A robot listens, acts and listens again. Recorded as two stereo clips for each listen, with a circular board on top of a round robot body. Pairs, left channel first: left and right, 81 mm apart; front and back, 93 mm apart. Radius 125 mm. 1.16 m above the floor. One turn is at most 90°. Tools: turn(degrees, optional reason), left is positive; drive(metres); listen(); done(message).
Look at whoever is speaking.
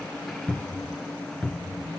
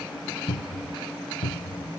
listen()
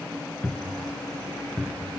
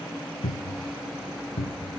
listen()
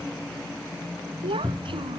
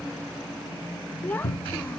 turn(degrees=-70, reason="The child speaking: 70° right.")
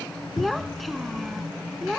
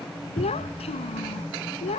done("Found it: a child speaking, straight ahead.")